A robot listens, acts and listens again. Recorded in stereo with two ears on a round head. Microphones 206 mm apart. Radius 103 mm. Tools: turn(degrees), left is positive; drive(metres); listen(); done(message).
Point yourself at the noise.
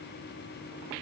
listen()
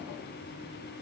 listen()
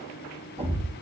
turn(degrees=-25)
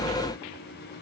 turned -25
listen()
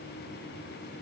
done("I heard a thud, but can't make it out now. It was about straight ahead or 130° right.")